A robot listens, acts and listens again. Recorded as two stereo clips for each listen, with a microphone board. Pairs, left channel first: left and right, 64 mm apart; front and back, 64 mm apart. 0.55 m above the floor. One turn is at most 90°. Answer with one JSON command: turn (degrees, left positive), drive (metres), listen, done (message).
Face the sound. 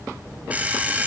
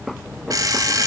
{"turn": -90}
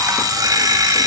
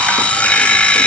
{"turn": -70}
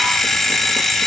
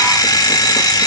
{"done": "Found it: an alarm clock, straight ahead, 1 to 2 m away."}